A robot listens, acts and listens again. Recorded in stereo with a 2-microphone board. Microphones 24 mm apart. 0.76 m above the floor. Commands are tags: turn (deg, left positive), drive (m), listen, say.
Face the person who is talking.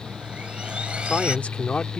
<turn deg="70"/>
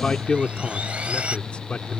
<turn deg="60"/>
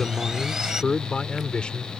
<turn deg="45"/>
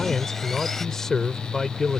<turn deg="20"/>
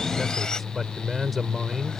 <say>Facing the man speaking.</say>